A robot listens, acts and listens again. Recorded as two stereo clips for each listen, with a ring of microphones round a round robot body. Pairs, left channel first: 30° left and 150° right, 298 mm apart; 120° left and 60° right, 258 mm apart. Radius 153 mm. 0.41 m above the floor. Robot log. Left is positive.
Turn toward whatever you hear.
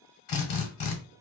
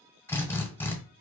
note: The drill: 40° left.
cmd yaw +40
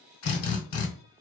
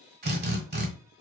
note: The drill is now 10° right.
cmd yaw -10
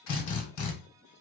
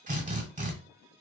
end: Found it: a drill, straight ahead, 1 to 2 m away.